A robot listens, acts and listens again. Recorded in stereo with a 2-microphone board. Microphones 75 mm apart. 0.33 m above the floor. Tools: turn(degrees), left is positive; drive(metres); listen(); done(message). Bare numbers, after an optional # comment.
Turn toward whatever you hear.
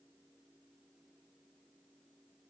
listen()
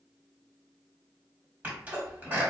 # The sneeze: about 20° right or 160° right.
turn(-20)
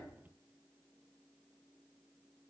listen()
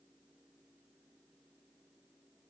done("I heard a sneeze, but can't make it out now. It was about straight ahead or 140° right.")